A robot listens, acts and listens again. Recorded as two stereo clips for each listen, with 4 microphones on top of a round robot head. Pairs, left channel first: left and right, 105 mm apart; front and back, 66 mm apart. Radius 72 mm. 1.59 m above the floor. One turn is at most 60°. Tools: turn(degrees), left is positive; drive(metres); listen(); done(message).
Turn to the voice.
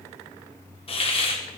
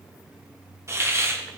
listen()
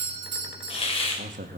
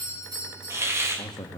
turn(degrees=-60)
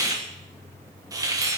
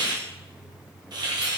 listen()
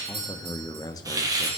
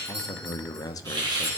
turn(degrees=25)
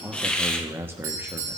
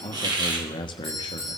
turn(degrees=-15)
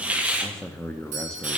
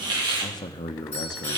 done("Facing the man speaking, 1 to 2 m away.")